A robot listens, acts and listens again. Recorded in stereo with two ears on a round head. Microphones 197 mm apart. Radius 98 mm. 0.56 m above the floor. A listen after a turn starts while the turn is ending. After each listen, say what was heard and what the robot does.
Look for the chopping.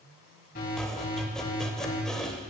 Turn 30° left.
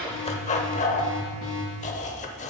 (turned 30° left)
So it is at 145° left. Turn 145° left.
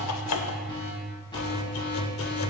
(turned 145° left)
Keep listening.
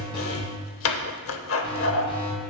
The chopping is now 65° left. Turn 65° left.
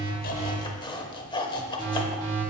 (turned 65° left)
The chopping is now 20° left. Turn 20° left.
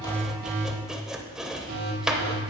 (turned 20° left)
Found it: chopping, straight ahead.